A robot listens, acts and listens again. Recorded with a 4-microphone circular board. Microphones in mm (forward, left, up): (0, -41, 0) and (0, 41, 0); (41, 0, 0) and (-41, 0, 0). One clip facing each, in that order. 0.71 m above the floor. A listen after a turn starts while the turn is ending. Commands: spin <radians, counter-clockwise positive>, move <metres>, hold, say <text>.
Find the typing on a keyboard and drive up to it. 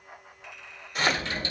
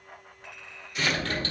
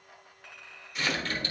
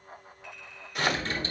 spin 2.09
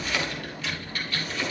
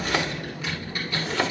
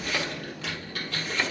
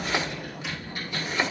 spin 0.17
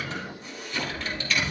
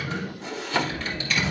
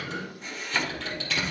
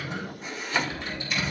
move 1.0
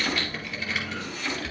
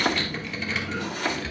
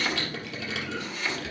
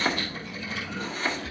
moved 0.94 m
move 1.0
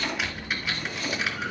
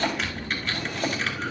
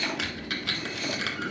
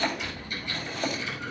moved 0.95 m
move 1.0
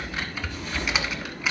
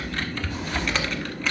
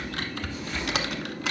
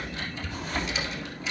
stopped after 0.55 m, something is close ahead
spin -0.17
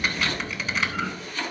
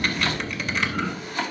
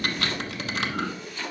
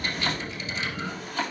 say I am next to the typing on a keyboard.